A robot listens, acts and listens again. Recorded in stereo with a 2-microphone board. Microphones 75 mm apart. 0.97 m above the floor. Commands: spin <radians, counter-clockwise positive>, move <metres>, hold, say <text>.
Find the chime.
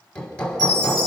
spin 0.96
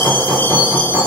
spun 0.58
spin 0.44
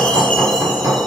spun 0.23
spin 0.17
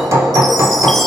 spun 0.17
hold
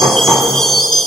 say Facing the chime, over 4 m away.